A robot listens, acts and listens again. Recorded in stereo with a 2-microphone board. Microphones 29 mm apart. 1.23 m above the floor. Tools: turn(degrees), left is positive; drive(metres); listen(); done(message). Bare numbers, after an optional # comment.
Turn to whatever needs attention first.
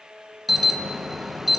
turn(-30)
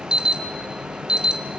# So it is at 145° right.
turn(-145)
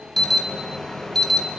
# The alarm is now 15° left.
turn(15)
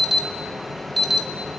done("Found it: an alarm, straight ahead.")